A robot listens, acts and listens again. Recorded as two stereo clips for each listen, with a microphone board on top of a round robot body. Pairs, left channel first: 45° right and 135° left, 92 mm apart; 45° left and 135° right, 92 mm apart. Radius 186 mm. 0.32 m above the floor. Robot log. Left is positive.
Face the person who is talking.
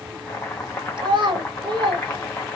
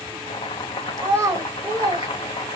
note: The child speaking: 165° left.
cmd yaw +165
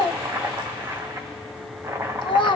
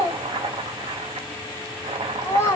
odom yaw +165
note: The child speaking is now 20° right.
cmd yaw -20
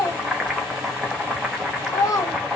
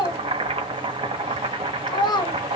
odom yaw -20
end: Found it: a child speaking, straight ahead, 1 to 2 m away.